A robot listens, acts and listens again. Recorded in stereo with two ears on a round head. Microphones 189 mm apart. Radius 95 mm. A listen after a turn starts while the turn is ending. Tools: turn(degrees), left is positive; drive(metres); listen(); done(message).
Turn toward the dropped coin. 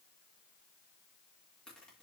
listen()
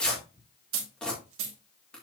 turn(degrees=-65)
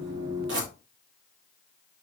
listen()
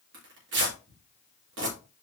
done("I heard a dropped coin, but can't make it out now. It was about straight ahead or 50° right.")